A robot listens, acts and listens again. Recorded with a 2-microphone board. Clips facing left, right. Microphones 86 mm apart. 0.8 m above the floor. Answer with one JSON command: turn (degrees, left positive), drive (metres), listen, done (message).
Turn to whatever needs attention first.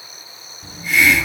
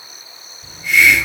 {"listen": true}
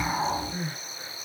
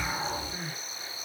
{"turn": 35}
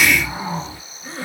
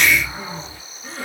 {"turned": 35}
{"done": "Found it: crying, straight ahead, 1 to 2 m away."}